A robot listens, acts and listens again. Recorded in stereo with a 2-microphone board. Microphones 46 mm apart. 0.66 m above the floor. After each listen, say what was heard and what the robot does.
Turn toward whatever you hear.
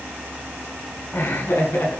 The laughter: about 60° left or 120° left. Turn 60° left.
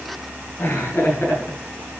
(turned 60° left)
So it is at 60° left. Turn 60° left.
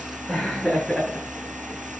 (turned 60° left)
Found it: laughter, straight ahead, over 4 m away.